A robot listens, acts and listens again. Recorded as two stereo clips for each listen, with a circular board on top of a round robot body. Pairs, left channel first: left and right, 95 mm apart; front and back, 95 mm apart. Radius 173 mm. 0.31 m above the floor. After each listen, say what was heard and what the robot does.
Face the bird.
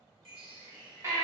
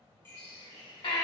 The bird: 65° right. Turn 65° right.
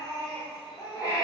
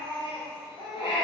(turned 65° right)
Keep listening.
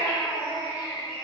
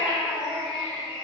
Keep listening.
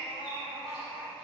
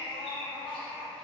Facing where the bird came from. I can't hear it now.